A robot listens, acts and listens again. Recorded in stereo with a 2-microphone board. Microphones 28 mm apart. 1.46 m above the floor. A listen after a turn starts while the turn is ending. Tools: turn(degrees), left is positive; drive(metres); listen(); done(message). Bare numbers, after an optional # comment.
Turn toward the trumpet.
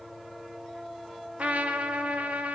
# The trumpet: about 70° right or 110° right.
turn(-70)
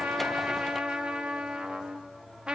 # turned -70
# So it is at 40° right.
turn(-40)
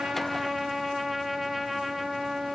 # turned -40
done("Facing the trumpet, 1 to 2 m away.")